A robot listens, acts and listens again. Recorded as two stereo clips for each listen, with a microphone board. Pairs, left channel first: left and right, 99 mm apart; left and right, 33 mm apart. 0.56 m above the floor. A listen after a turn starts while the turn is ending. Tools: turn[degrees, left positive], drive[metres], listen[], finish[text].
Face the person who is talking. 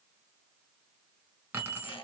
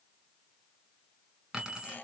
Action: listen[]
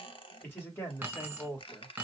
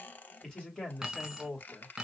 Thought: The man speaking: about 25° left or 155° left.
Action: turn[25]
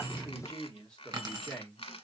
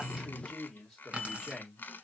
Action: turn[30]
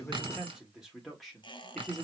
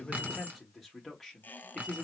Action: finish[Facing the man speaking.]